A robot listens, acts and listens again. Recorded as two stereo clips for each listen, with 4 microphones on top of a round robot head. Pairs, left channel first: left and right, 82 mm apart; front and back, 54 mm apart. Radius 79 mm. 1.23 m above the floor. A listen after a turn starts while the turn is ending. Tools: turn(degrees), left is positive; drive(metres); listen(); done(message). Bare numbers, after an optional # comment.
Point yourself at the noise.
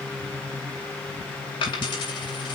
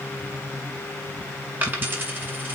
# The dropped coin: 130° left.
turn(130)
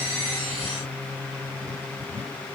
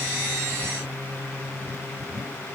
done("Facing where the dropped coin came from. I can't hear it now.")